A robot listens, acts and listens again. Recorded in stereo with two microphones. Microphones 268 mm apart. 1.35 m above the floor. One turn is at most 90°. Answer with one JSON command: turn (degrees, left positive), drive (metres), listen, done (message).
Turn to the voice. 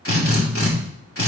{"listen": true}
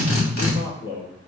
{"turn": 90}
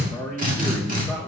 {"turn": 15}
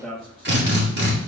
{"done": "Found it: a man speaking, straight ahead."}